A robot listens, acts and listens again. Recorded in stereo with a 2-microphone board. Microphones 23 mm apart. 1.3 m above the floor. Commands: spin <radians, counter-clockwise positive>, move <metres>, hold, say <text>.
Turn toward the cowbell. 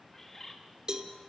spin -0.61
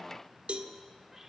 spin -1.92
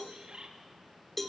spin 0.26
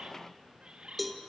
say Facing the cowbell.